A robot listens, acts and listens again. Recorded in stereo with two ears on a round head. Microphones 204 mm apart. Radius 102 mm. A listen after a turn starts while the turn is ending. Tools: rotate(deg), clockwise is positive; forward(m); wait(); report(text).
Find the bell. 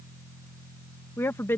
wait()
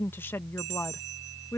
rotate(50)
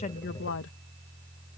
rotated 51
wait()
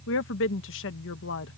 wait()
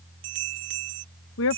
rotate(70)
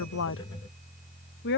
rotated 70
wait()
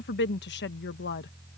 wait()
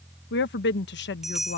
report("Found it: a bell, straight ahead.")